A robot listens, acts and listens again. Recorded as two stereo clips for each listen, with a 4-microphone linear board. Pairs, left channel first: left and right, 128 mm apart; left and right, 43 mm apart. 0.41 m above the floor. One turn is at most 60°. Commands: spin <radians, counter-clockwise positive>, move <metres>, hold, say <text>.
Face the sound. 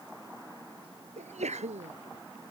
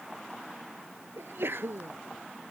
spin -1.05
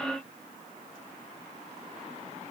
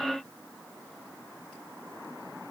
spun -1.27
hold
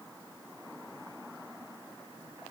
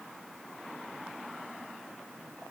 say I heard a sneeze, but can't make it out now. It was about 10° left or 45° right.